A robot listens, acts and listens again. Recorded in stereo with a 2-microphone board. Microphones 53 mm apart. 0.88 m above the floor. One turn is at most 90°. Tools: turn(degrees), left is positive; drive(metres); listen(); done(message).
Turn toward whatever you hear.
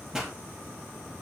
turn(degrees=-30)
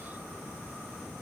listen()
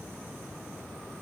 done("I heard a pop, but can't make it out now. It was about 20° left or 140° right.")